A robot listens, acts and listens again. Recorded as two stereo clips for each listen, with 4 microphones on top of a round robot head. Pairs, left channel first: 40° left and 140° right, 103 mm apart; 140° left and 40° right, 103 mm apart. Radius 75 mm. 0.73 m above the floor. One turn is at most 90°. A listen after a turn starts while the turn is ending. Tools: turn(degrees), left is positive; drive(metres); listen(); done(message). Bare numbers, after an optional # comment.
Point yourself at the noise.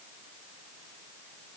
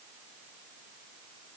listen()
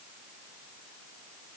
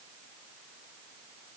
listen()
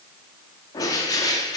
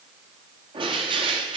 # The bird: 10° right.
turn(-10)
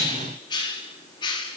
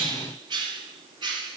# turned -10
done("Found it: a bird, straight ahead, 1 to 2 m away.")